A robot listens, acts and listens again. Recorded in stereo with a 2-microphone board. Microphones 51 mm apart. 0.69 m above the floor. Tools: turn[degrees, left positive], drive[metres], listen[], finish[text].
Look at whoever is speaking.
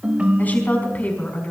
Thought: The woman speaking: about 35° left or 145° left.
Action: turn[35]
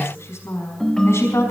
Thought: So it is at 115° left.
Action: turn[115]
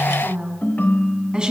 Thought: The woman speaking is now 15° right.
Action: turn[-15]
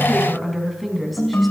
Action: finish[Found it: a woman speaking, straight ahead, over 4 m away.]